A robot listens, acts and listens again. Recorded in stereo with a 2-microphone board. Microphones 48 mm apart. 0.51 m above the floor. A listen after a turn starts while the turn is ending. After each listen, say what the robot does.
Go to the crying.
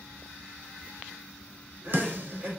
Turn 30° right.
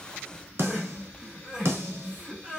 Turn 10° right.
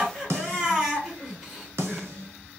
Drive 1.0 m forward.
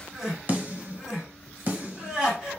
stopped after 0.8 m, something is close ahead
Turn 10° right.
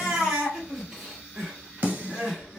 Turn 10° right.
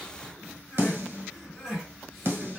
Arrived at the crying, straight ahead.